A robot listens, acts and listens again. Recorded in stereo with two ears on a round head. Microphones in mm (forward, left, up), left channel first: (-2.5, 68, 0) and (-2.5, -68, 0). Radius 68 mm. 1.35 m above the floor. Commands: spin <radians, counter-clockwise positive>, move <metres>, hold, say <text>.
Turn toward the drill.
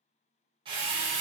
spin -0.61
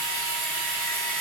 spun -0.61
say Facing the drill, under 1 m away.